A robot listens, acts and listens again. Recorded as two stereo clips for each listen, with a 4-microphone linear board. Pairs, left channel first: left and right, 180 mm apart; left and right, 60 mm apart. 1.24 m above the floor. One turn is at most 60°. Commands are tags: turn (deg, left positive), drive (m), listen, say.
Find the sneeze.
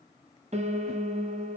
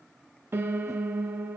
<listen/>
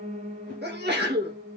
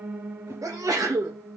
<turn deg="-60"/>
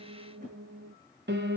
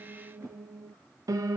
<listen/>
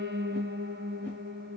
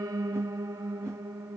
<say>I heard a sneeze, but can't make it out now. It was about 10° right or 50° right.</say>